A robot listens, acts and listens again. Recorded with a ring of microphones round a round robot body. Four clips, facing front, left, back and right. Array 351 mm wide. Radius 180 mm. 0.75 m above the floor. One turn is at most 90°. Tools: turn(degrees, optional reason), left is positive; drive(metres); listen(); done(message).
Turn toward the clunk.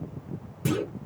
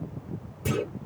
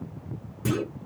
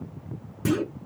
turn(degrees=-85, reason="The clunk: 85° right.")
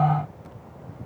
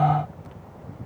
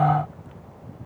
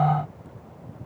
done("I heard a clunk from this way, but can't make it out now.")